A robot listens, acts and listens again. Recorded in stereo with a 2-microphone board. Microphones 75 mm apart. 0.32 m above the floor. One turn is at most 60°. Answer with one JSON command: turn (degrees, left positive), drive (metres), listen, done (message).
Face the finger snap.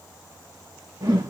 {"listen": true}
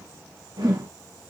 {"listen": true}
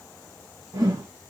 {"done": "I can't make out a finger snap, only a whoosh."}